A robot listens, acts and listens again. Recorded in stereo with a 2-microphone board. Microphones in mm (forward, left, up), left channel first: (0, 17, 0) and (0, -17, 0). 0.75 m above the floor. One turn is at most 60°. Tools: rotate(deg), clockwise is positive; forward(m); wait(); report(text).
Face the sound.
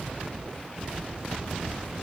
wait()
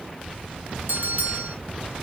rotate(60)
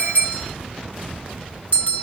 rotate(55)
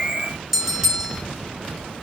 rotate(15)
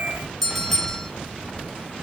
report("Facing the bell, 2 to 4 m away.")